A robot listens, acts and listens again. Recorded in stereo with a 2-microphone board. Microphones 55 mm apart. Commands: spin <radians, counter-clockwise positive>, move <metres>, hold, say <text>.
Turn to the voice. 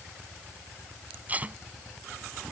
hold
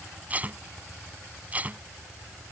hold
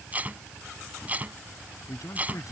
spin 1.57
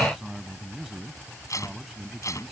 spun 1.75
say Facing the man speaking.